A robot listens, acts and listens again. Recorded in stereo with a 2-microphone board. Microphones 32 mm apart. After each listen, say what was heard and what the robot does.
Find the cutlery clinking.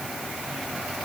Keep listening.
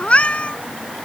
Keep listening.
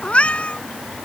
I can't make out cutlery clinking, only a cat meowing.